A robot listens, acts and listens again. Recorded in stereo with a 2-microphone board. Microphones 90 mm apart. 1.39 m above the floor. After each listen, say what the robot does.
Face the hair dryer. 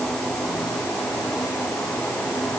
Keep listening.
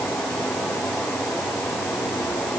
Keep listening.
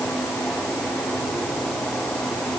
I can't make out a hair dryer.